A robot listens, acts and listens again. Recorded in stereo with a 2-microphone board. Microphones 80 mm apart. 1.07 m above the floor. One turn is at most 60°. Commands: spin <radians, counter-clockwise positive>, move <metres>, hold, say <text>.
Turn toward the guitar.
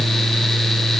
hold
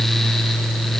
hold
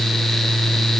say I can't make out a guitar.